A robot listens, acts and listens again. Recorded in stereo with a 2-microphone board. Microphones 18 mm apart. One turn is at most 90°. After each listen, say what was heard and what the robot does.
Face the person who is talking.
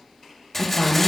The woman speaking: about 20° right or 160° right. Turn 20° right.
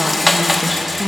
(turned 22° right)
Facing the woman speaking, 1 to 2 m away.